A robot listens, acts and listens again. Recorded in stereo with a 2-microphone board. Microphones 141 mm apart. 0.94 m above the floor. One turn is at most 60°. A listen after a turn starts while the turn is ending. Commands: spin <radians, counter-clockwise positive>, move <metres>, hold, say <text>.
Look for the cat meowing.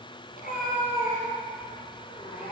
spin 1.05
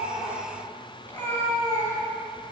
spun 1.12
spin 0.35
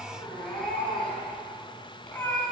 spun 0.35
spin 0.17
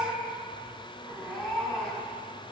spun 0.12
say Found it: a cat meowing, straight ahead, over 4 m away.